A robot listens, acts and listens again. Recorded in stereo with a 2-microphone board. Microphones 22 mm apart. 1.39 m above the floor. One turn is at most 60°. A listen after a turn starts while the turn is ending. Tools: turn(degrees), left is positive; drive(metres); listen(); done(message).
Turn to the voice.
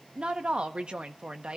turn(degrees=-50)
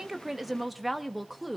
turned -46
done("Found it: a woman speaking, straight ahead, 1 to 2 m away.")